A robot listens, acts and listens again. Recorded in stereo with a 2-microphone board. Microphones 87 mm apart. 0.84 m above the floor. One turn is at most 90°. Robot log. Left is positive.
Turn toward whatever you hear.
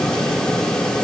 cmd idle
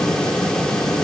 cmd idle
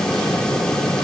end: I can't make out anything to turn to.